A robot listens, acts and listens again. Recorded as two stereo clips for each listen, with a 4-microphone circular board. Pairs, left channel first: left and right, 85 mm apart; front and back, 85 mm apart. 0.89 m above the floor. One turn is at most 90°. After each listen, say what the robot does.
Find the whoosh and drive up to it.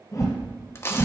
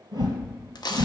Turn 90° left.
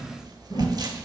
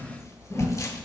Turn 60° left.
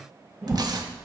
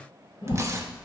Turn 15° right.
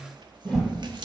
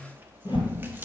Drive 1.0 m forward.
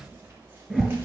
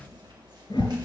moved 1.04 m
Turn 10° right.
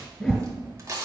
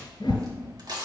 Drive 1.0 m forward.
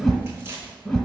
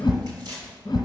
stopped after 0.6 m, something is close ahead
I am next to the whoosh.